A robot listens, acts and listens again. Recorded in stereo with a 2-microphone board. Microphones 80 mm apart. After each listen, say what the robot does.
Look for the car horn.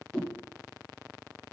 Keep listening.
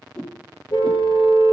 Turn 90° left.
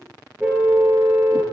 Turn 15° right.
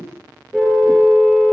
Found it: a car horn, straight ahead, over 4 m away.